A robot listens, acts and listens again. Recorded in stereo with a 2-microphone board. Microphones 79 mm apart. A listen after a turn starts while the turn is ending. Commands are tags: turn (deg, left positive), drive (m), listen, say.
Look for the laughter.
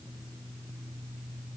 <listen/>
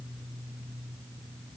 <listen/>
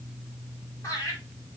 <turn deg="45"/>
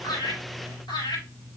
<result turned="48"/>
<turn deg="85"/>
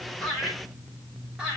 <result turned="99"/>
<turn deg="-10"/>
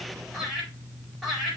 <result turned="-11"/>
<say>Facing the laughter, over 4 m away.</say>